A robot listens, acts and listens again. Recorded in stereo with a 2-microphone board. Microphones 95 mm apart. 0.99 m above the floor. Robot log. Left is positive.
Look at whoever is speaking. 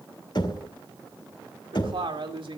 note: The woman speaking: about 65° right or 115° right.
cmd yaw -65
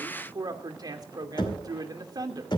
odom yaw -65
note: So it is at 45° right.
cmd yaw -45
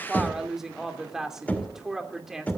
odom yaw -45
end: Facing the woman speaking.